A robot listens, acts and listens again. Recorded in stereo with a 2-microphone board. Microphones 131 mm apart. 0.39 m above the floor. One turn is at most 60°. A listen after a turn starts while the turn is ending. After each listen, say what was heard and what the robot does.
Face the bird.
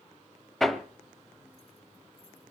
Keep listening.
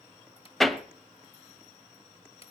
Keep listening.
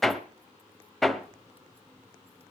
I can't make out a bird, only hammering.